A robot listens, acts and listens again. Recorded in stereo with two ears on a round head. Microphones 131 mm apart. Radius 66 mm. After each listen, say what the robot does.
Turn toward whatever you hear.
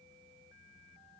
Keep listening.
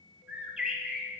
Turn 30° right.
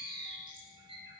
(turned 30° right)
Turn 145° right.
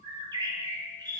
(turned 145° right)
Turn 30° right.
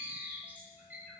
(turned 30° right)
Turn 15° right.
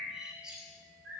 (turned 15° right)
Facing the bird.